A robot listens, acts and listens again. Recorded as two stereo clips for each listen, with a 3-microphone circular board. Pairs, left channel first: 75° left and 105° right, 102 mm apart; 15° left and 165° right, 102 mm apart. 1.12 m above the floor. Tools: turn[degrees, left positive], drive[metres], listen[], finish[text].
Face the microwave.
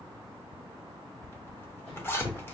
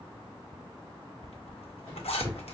Thought: The microwave: 95° left.
Action: turn[95]
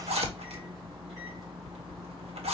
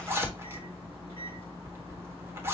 Thought: The microwave is now 15° right.
Action: turn[-15]
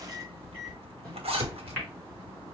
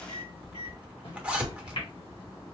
Action: finish[Facing the microwave.]